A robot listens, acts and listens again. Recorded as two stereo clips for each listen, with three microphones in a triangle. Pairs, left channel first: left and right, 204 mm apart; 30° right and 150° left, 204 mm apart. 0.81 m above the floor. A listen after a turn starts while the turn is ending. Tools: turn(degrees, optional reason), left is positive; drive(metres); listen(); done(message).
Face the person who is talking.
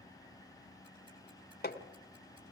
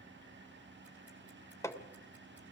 listen()
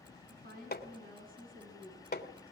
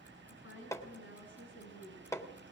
turn(degrees=-40, reason="The woman speaking: 40° right.")
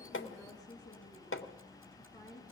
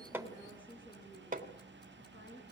turn(degrees=20, reason="The woman speaking is now 20° left.")
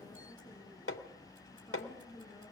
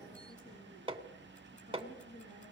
done("Found it: a woman speaking, straight ahead, over 4 m away.")